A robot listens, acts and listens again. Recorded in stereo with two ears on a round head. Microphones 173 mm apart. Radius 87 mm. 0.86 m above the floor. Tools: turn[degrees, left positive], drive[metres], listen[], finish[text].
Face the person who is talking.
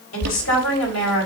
Action: turn[90]
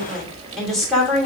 Action: finish[Found it: a woman speaking, straight ahead, over 4 m away.]